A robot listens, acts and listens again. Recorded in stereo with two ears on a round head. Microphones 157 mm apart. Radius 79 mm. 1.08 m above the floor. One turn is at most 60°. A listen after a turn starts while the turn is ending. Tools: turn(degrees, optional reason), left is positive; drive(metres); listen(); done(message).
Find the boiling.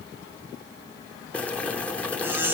turn(degrees=30)
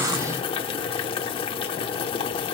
turn(degrees=60, reason="So it is at 145° left.")
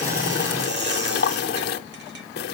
turn(degrees=60, reason="The boiling is now 80° left.")
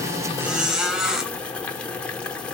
turn(degrees=10, reason="The boiling is now 10° left.")
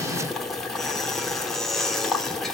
done("Facing the boiling, 1 to 2 m away.")